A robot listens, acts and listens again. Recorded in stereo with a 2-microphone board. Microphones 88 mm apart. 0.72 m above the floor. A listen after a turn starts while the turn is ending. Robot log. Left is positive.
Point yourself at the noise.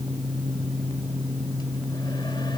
cmd idle
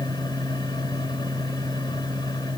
cmd idle
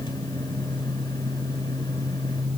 end: I can't make out anything to turn to.